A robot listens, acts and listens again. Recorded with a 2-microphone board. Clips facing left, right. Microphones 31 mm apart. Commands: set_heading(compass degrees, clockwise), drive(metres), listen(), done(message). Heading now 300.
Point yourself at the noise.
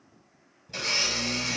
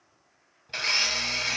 set_heading(335)
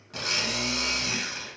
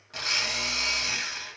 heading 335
done("Facing the blender.")